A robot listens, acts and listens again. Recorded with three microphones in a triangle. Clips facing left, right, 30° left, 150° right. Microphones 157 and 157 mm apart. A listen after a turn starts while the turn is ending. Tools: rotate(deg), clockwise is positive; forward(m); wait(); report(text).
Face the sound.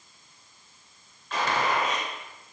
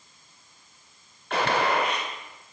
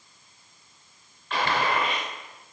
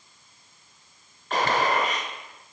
rotate(105)
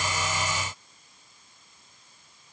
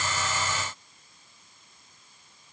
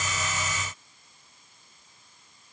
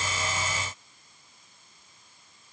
report("Facing where the gunshot came from. I can't hear it now.")